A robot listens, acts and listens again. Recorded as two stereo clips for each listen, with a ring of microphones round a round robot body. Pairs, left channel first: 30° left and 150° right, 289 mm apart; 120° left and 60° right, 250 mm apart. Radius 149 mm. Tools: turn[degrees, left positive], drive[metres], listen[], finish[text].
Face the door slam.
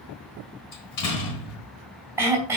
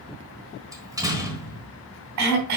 Thought: The door slam: 20° left.
Action: turn[20]
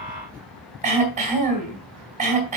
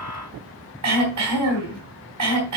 Action: finish[Facing where the door slam came from. I can't hear it now.]